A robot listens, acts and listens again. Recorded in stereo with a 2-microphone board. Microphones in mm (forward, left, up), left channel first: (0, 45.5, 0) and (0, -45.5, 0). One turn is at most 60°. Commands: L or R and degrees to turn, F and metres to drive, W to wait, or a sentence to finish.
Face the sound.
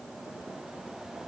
W
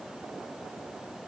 W
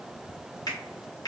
L45
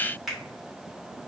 Found it: a finger snap, straight ahead.